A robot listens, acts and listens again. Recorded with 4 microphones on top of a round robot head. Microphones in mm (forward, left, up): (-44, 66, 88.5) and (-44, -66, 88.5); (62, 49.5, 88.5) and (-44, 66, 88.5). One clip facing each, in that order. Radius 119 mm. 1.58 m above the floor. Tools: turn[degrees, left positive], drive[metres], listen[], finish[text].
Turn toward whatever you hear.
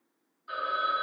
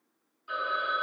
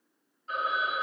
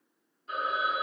Thought: The phone ringing: 165° right.
Action: turn[-165]
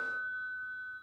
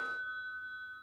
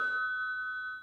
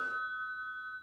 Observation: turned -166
Action: finish[Found it: a phone ringing, straight ahead.]